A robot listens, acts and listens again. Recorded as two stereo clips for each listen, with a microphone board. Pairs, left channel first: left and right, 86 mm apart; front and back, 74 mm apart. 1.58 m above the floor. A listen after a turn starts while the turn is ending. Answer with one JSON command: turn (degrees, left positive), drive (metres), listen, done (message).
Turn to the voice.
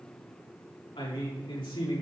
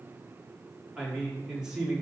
{"turn": 100}
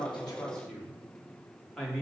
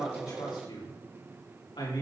{"turn": 10}
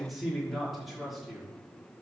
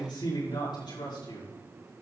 {"done": "Found it: a man speaking, straight ahead, over 4 m away."}